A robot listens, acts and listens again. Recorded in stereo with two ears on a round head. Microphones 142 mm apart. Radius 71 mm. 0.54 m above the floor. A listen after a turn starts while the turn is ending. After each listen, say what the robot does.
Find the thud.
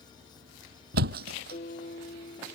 Turn 60° right.
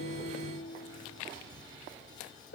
Keep listening.
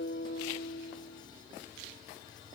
I heard a thud, but can't make it out now. It was about straight ahead or 60° right.